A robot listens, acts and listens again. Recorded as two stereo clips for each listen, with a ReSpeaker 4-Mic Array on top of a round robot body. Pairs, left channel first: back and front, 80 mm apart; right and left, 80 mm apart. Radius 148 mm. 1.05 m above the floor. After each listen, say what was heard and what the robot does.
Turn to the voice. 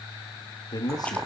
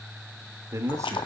The man speaking: 145° left. Turn 145° left.
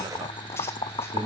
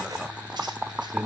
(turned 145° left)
The man speaking is now 10° left. Turn 10° left.
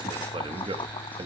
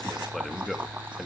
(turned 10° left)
Facing the man speaking.